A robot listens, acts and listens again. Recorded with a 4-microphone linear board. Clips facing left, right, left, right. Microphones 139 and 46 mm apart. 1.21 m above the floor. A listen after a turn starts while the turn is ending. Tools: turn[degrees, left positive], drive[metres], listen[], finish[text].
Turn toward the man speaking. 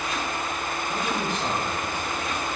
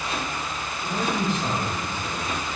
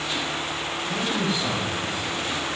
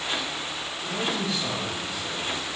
Thought: The man speaking: about 20° left or 160° left.
Action: turn[20]
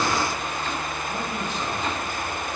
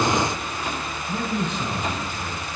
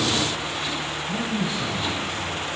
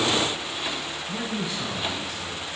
Action: turn[30]
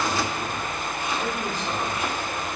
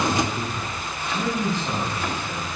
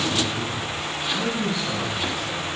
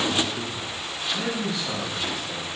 Thought: So it is at 10° right.
Action: turn[-10]
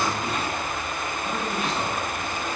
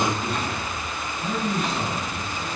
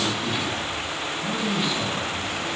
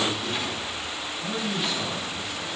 Action: finish[Facing the man speaking.]